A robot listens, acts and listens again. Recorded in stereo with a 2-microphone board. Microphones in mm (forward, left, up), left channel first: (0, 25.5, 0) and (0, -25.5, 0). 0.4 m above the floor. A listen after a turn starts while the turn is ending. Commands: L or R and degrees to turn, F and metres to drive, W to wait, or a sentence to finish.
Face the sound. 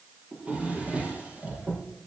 R25
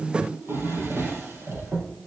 R130
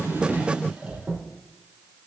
R25
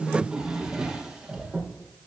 R15
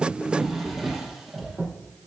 Found it: a drawer, straight ahead, 2 to 4 m away.